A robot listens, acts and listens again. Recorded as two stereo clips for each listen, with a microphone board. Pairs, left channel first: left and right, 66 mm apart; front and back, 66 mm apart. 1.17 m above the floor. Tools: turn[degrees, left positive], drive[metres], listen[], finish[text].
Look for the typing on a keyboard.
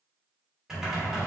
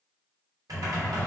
Thought: The typing on a keyboard: 175° right.
Action: turn[-175]
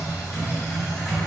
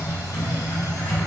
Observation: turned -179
Action: finish[Found it: typing on a keyboard, straight ahead.]